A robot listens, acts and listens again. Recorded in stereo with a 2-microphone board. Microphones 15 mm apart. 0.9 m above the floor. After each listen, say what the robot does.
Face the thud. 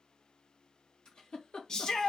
Keep listening.
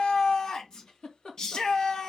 Keep listening.
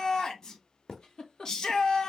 Turn 30° left.
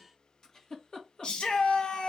Keep listening.
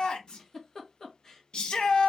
I heard a thud, but can't make it out now. It was about 25° right or 145° left.